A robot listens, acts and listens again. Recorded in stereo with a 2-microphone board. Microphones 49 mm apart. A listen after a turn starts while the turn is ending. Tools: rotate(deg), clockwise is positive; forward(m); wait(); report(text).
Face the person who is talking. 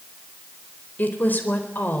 rotate(-40)
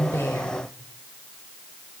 wait()
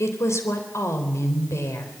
rotate(-100)
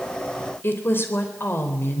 rotate(-50)
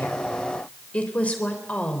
rotate(-30)
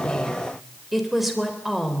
report("Found it: a woman speaking, straight ahead.")